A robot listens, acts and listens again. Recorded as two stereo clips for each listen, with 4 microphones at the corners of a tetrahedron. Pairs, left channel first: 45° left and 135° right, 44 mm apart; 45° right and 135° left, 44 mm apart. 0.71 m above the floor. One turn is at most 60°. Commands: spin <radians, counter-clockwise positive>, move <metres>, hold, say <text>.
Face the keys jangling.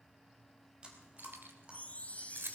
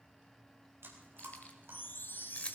spin -1.05
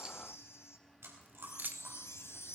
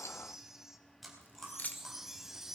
spin -1.05
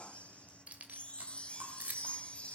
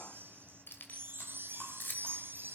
spin -1.05
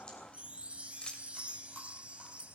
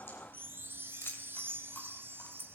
spin -0.44
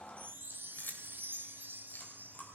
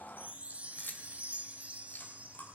say Facing the keys jangling, 1 to 2 m away.